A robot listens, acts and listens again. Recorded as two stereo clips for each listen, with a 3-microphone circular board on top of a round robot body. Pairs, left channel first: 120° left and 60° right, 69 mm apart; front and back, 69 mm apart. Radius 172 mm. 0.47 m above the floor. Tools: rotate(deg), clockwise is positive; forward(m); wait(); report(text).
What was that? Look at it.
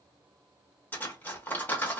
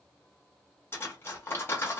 rotate(-55)
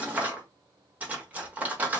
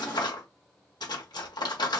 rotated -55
rotate(-10)
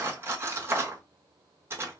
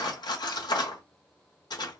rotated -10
report("Found it: cutlery clinking, straight ahead.")